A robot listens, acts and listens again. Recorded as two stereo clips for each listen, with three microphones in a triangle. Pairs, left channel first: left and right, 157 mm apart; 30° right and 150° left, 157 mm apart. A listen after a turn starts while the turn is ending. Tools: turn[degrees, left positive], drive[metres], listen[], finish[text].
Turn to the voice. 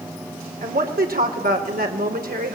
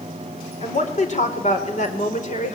Thought: The woman speaking: 70° right.
Action: turn[-70]
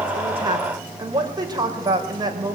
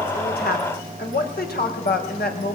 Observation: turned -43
Thought: The woman speaking is now 25° right.
Action: turn[-25]
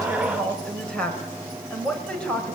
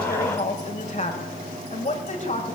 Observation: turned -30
Action: finish[Facing the woman speaking.]